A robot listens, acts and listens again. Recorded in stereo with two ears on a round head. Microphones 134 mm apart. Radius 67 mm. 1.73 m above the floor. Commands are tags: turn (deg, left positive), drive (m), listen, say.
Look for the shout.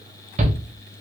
<turn deg="-45"/>
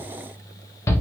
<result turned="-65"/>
<turn deg="20"/>
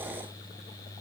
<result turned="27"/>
<turn deg="-10"/>
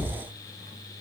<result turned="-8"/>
<listen/>
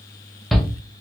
<say>Found it: a shout, straight ahead.</say>